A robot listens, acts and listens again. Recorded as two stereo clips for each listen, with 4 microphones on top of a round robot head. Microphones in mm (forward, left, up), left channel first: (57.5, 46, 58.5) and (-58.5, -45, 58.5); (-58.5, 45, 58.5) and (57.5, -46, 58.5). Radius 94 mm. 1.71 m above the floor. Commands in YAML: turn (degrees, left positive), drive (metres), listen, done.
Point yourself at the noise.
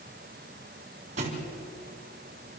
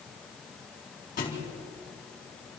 turn: 175
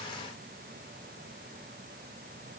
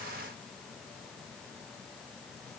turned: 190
turn: -15
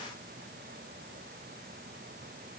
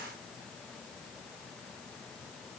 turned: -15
done: "I heard a thud from this way, but can't make it out now."